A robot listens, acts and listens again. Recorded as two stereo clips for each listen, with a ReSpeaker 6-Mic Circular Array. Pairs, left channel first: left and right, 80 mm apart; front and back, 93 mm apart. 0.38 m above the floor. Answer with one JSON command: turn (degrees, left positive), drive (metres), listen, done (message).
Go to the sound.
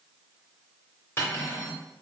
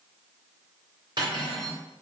{"turn": 150}
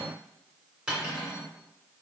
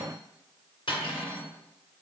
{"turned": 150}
{"turn": -10}
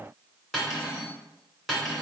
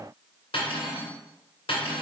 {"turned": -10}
{"drive": 1.0}
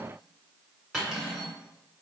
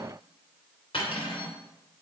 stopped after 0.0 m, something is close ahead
{"done": "Blocked. The cutlery clinking is further on, straight ahead."}